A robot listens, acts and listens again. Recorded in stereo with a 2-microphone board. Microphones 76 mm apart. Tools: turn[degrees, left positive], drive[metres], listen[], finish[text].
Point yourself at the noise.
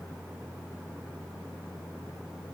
Action: listen[]
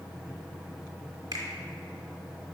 Thought: The finger snap: about 55° right or 125° right.
Action: turn[-55]
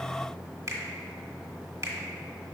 Thought: So it is at 50° right.
Action: turn[-50]
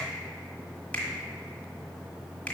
Thought: The finger snap is now 25° left.
Action: turn[25]
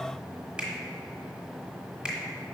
Thought: The finger snap is now 15° right.
Action: turn[-15]
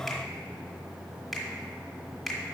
Action: finish[Facing the finger snap.]